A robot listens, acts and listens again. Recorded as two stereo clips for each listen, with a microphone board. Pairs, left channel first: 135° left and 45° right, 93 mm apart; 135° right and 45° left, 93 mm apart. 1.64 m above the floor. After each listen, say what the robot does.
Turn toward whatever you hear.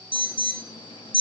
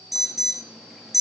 Turn 135° left.
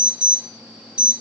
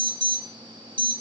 Turn 35° left.
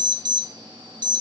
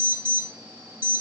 Turn 20° right.
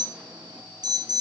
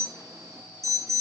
Turn 10° right.
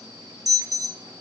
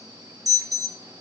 Found it: an alarm, straight ahead, under 1 m away.